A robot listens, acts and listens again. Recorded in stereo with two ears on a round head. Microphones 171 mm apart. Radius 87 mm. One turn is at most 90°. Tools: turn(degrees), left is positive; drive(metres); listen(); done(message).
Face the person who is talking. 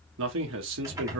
turn(degrees=-90)
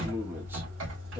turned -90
turn(degrees=-10)
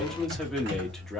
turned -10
done("Facing the man speaking, under 1 m away.")